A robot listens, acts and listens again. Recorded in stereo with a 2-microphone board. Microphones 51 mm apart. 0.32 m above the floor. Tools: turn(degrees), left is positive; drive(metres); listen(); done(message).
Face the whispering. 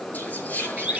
turn(degrees=35)
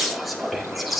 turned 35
done("Facing the whispering, over 4 m away.")